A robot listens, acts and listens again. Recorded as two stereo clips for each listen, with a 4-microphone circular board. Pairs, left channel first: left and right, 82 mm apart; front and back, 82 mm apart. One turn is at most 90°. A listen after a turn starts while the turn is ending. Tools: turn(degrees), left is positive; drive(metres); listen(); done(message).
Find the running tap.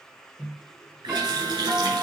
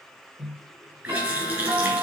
turn(degrees=-90)
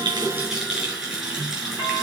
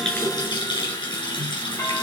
turn(degrees=-10)
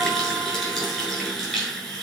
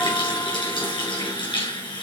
done("Facing the running tap, 2 to 4 m away.")